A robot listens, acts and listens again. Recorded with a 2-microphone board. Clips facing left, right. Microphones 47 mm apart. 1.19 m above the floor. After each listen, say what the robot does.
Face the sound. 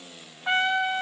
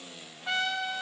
Turn 30° left.
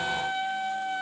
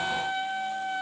Found it: a trumpet, straight ahead, 2 to 4 m away.